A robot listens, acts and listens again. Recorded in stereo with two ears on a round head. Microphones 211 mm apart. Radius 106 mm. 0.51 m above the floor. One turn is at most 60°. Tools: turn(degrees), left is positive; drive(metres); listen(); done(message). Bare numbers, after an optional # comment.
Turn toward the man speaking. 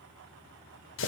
listen()
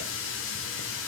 listen()
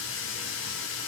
done("I can't make out a man speaking, only a running tap.")